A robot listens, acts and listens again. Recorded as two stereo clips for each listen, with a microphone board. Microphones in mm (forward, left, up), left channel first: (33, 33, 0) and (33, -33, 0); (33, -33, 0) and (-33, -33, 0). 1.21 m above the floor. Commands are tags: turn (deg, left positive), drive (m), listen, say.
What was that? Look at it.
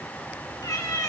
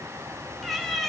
<turn deg="85"/>
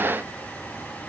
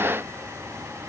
<listen/>
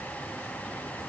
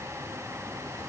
<listen/>
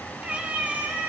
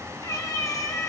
<turn deg="-30"/>
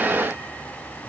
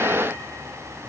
<listen/>
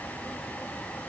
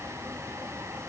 <listen/>
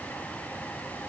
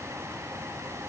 <say>Facing where the cat meowing came from. I can't hear it now.</say>